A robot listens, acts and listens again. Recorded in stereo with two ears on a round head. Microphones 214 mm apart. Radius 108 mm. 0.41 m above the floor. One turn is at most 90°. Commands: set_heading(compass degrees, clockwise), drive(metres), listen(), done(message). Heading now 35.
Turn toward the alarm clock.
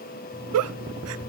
set_heading(10)
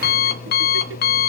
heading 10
set_heading(280)
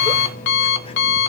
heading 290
set_heading(240)
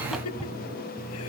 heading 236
done("Facing the alarm clock, 1 to 2 m away.")